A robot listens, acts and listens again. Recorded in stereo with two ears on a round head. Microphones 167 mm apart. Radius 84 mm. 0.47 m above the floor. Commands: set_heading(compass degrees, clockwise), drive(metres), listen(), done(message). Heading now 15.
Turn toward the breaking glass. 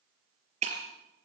set_heading(50)
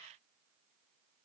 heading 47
listen()
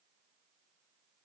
done("I heard breaking glass, but can't make it out now. It was about straight ahead or 115° right.")